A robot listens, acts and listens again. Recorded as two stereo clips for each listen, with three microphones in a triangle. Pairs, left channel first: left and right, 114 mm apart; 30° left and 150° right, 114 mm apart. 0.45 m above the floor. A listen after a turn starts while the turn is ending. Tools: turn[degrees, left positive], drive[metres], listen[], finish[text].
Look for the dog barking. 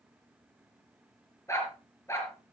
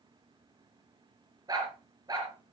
Thought: The dog barking: 155° left.
Action: turn[155]
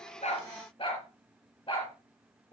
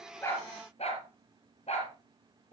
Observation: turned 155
Thought: The dog barking is now 50° left.
Action: turn[50]
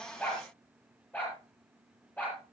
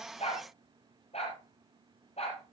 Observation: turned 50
Thought: The dog barking is now 15° left.
Action: turn[15]
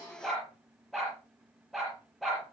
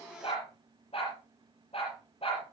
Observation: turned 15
Action: finish[Found it: a dog barking, straight ahead, over 4 m away.]